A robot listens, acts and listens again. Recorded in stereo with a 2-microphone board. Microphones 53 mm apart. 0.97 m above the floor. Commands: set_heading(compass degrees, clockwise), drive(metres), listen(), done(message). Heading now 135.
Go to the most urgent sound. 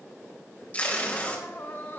set_heading(85)
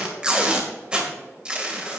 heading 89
listen()
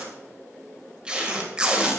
listen()
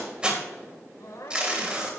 set_heading(4)
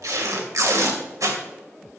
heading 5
listen()
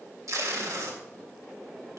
listen()
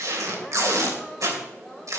done("Facing where the crying came from. I can't hear it now. I did not reach it.")